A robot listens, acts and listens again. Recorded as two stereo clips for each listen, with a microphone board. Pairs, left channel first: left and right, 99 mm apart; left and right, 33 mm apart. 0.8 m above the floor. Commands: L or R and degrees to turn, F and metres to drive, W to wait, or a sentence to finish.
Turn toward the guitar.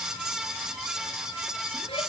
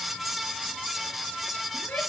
W
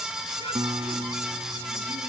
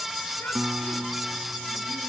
R55
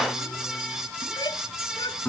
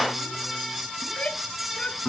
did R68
L15
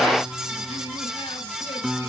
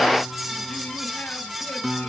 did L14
Facing the guitar.